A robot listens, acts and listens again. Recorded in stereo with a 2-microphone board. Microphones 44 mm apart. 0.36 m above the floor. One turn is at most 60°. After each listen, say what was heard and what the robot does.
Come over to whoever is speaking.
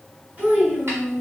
The child speaking: about 35° right or 145° right. Turn 35° right.
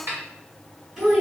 Drive 1.0 m forward.
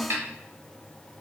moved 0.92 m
Keep listening.
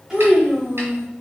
The child speaking is now 15° right. Turn 15° right.
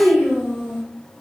Drive 1.0 m forward.
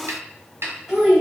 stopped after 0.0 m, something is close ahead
Arrived at the child speaking, straight ahead.